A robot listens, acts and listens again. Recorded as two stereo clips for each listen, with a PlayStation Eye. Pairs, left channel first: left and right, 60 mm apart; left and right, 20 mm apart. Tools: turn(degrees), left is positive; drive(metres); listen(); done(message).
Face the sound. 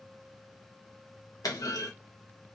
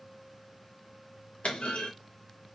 turn(degrees=90)
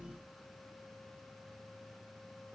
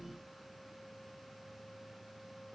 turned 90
done("Facing where the clunk came from. I can't hear it now.")